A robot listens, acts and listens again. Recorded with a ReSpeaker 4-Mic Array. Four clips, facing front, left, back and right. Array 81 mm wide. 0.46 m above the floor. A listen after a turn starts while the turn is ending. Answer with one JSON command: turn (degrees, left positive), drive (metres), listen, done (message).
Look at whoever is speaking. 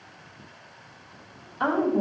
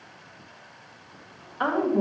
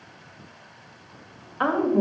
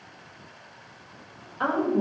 {"turn": 165}
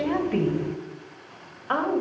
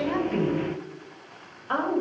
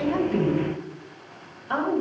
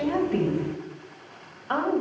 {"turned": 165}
{"done": "Facing the woman speaking, 2 to 4 m away."}